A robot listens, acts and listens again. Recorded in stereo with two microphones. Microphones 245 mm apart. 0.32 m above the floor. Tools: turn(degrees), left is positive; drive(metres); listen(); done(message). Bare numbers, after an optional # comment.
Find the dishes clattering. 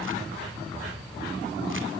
listen()
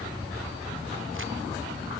listen()
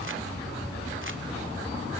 done("I can't make out dishes clattering.")